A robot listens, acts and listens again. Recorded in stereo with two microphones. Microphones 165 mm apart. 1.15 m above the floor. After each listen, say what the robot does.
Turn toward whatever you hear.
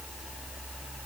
Keep listening.
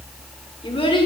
Turn 30° left.
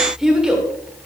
Facing the child speaking, 2 to 4 m away.